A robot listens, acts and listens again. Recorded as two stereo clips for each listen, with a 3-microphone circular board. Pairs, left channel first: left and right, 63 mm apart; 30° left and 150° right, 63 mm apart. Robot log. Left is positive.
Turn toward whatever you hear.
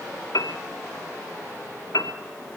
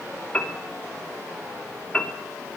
note: The piano: 95° left.
cmd yaw +95
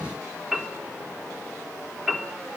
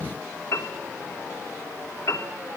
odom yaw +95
note: The piano is now 10° right.
cmd yaw -10
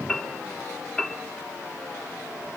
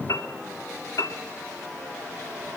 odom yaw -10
end: Facing the piano.